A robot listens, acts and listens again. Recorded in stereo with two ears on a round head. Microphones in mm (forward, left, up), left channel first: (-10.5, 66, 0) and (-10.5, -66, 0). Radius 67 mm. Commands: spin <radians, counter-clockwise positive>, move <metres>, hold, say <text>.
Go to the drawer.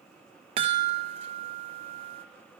hold
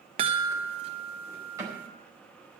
spin -0.35
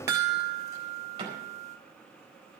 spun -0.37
spin -2.36
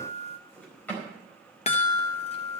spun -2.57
spin 0.17
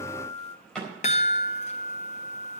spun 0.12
move 1.0
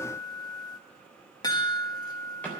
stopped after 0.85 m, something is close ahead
spin 0.17
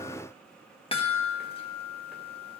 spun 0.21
hold
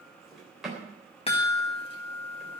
say Blocked. The drawer is further on, straight ahead.